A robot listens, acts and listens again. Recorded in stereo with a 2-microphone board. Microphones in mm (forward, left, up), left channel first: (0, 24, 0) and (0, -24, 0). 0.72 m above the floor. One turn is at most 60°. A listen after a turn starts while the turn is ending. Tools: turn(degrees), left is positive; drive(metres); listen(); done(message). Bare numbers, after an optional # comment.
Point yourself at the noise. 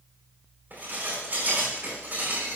# The dishes clattering: about 40° right or 140° right.
turn(-40)
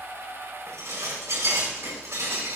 # So it is at 100° right.
turn(-60)
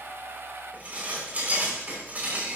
# The dishes clattering is now 35° right.
turn(-35)
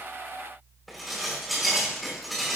done("Found it: dishes clattering, straight ahead, over 4 m away.")